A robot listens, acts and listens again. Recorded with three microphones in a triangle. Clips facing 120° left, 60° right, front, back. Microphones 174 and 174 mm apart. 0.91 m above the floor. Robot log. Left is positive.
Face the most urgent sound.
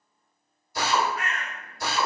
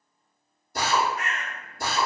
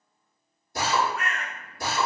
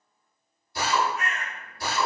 cmd idle
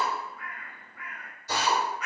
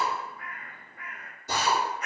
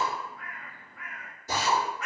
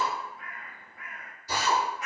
cmd idle
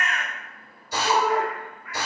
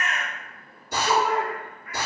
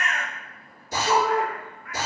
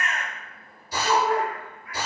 note: The shout: 165° left.
cmd yaw +165
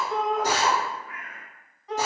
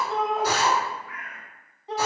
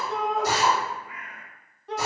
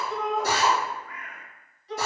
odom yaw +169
end: Found it: a shout, straight ahead, under 1 m away.